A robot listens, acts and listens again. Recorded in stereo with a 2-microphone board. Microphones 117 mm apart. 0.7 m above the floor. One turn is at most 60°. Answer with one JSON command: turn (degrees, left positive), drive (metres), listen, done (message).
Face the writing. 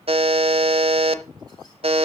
{"listen": true}
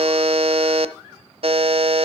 {"listen": true}
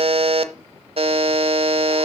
{"done": "I can't make out writing, only a buzzer."}